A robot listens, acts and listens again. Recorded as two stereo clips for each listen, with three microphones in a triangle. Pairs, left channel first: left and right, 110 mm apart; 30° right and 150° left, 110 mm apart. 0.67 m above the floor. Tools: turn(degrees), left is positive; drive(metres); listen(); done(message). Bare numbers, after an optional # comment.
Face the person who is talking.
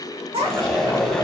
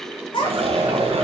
# The child speaking: 70° right.
turn(-70)
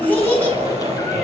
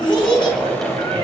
# The child speaking is now 15° left.
turn(15)
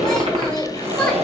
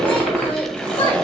done("Facing the child speaking, 2 to 4 m away.")